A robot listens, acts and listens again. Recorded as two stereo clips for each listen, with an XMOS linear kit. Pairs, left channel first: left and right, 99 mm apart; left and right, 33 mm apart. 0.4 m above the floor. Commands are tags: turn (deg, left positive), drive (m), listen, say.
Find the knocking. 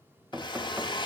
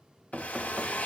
<turn deg="-25"/>
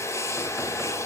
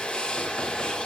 <listen/>
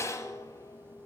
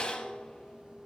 <listen/>
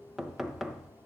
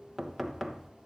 <say>Found it: knocking, straight ahead.</say>